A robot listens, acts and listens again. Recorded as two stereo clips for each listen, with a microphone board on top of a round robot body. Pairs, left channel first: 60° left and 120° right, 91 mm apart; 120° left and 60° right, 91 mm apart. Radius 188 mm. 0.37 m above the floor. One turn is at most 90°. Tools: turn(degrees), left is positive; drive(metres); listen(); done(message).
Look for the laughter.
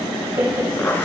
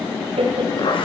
turn(degrees=-55)
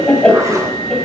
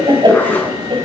turn(degrees=-25)
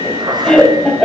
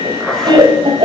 turn(degrees=-30)
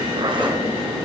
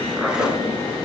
listen()
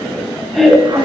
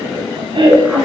turn(degrees=-30)
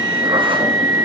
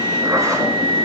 listen()
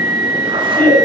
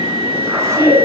turn(degrees=-10)
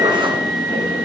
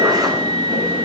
listen()
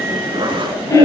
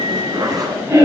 done("Found it: laughter, straight ahead.")